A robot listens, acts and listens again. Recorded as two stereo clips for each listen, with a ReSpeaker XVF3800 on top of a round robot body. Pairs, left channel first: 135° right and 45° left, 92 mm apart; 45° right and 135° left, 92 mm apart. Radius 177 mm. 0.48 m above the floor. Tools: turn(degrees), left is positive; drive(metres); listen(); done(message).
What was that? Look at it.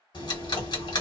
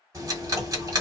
turn(degrees=-170)
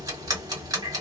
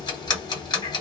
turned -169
done("Facing the ticking, 1 to 2 m away.")